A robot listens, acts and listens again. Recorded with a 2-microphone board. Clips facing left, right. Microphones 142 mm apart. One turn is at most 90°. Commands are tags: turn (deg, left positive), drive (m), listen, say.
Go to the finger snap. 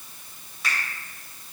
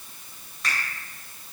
<turn deg="30"/>
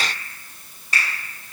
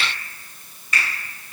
<turn deg="90"/>
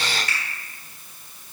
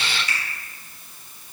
<turn deg="60"/>
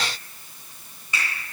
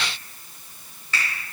<turn deg="15"/>
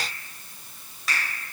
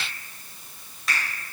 <drive m="1.0"/>
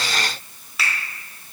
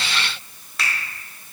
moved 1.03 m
<drive m="1.0"/>
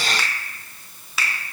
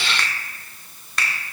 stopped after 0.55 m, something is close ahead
<say>Arrived at the finger snap, straight ahead.</say>